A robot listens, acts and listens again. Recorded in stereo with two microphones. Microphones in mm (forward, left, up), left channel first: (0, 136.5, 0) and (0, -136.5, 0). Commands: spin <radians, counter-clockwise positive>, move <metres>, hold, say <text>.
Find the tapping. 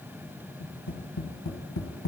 spin 1.57
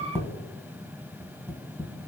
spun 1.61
spin -0.17
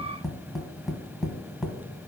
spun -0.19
say Facing the tapping.